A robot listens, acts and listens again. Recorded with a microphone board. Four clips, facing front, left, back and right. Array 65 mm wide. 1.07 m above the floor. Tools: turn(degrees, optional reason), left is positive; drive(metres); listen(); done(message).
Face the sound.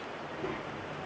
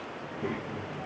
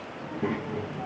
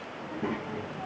turn(degrees=-170, reason="The child speaking: 170° right.")
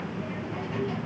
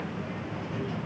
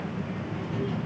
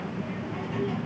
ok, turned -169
turn(degrees=-45, reason="The child speaking is now 45° right.")
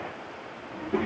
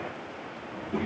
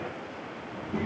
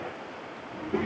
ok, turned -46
turn(degrees=-15, reason="The child speaking is now 15° right.")
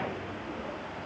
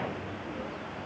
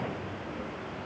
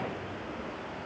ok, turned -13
done("Facing the child speaking, 1 to 2 m away.")